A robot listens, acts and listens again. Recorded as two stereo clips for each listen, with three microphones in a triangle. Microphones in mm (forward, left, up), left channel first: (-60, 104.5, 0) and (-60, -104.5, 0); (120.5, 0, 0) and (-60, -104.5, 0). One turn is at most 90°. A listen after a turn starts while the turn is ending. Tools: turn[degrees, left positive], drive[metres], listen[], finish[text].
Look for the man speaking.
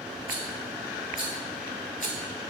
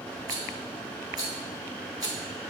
Action: listen[]
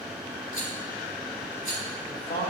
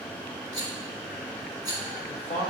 Thought: The man speaking: 70° left.
Action: turn[70]
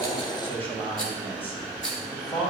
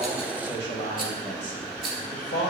Thought: The man speaking is now 10° left.
Action: turn[10]
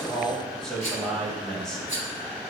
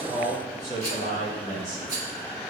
Action: finish[Facing the man speaking, 2 to 4 m away.]